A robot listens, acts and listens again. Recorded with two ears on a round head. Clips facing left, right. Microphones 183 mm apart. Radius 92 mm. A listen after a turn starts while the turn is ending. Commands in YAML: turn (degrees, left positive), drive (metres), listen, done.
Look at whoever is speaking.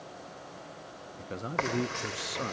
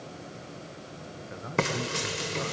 turn: 45
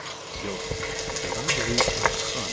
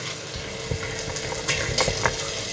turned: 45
listen: true
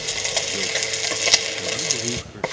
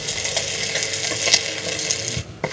listen: true
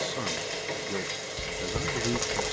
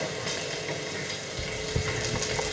done: "I heard a man speaking, but can't make it out now. It was about straight ahead or 90° left."